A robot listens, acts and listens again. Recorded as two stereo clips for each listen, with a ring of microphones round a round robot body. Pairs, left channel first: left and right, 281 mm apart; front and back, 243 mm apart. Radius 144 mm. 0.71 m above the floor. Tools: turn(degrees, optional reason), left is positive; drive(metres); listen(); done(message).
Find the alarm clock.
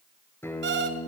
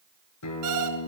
turn(degrees=-140, reason="The alarm clock: 140° right.")
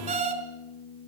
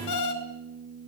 turn(degrees=-20, reason="The alarm clock is now 20° right.")
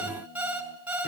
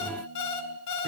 done("Facing the alarm clock, over 4 m away.")